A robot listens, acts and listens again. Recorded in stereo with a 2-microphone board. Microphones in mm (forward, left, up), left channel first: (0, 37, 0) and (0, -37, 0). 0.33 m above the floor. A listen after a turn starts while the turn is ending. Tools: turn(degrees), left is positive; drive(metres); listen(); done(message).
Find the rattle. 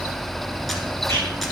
listen()
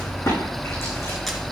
turn(degrees=40)
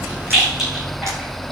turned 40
done("Found it: a rattle, straight ahead, over 4 m away.")